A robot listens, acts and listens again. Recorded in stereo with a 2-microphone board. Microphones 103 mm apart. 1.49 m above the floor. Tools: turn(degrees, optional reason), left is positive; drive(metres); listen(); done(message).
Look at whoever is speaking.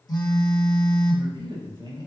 turn(degrees=-45, reason="The man speaking: about 45° right or 135° right.")
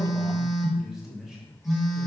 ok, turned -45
done("Facing the man speaking.")